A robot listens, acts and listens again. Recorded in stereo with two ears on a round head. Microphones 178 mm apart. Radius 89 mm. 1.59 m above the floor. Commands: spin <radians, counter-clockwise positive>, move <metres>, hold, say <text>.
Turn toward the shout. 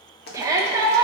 spin -0.26
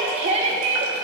spin -2.62
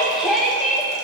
say Found it: a shout, straight ahead.